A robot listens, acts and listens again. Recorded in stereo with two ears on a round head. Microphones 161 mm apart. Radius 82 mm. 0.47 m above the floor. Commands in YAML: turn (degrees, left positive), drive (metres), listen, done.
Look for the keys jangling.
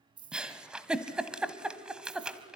turn: -25
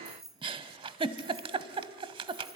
done: "Found it: keys jangling, straight ahead."